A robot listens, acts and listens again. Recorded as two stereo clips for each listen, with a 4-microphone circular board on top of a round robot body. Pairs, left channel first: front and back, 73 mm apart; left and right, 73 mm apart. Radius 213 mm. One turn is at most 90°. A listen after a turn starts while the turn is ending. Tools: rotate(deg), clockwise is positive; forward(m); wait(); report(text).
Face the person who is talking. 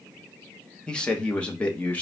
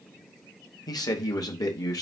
rotate(-65)
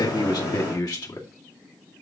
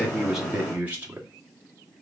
rotate(30)
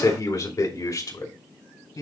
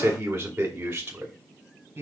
rotate(30)
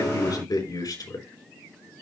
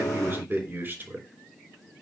rotate(25)
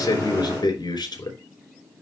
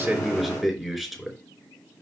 report("Facing the man speaking.")